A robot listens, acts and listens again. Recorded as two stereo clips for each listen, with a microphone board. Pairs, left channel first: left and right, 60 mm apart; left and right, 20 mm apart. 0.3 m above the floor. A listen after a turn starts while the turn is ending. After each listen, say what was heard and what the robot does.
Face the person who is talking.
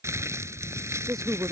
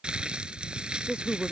The woman speaking: about 70° right or 110° right. Turn 70° right.
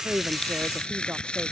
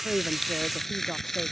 Keep listening.
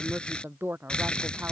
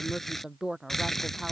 So it is at 40° right. Turn 40° right.
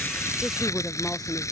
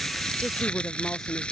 The woman speaking is now 10° left. Turn 10° left.
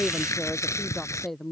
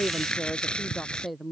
Found it: a woman speaking, straight ahead.